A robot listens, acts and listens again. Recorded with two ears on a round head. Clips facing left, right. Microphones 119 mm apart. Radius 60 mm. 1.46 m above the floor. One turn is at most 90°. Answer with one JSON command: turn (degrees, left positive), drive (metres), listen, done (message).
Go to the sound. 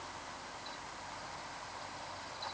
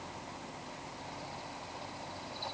{"listen": true}
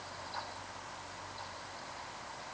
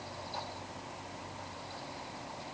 {"listen": true}
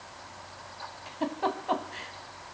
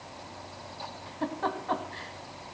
{"turn": 20}
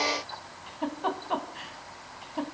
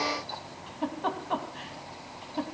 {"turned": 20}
{"drive": 1.0}
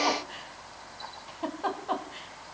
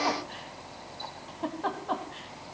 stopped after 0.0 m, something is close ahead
{"done": "Something is in my way. I am facing the giggle but have not reached it."}